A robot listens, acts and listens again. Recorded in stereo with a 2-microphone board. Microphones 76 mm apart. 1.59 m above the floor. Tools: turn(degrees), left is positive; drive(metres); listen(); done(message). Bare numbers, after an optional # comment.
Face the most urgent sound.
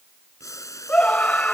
# The scream: about 15° left or 165° left.
turn(15)
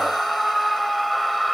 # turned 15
done("Found it: a scream, straight ahead.")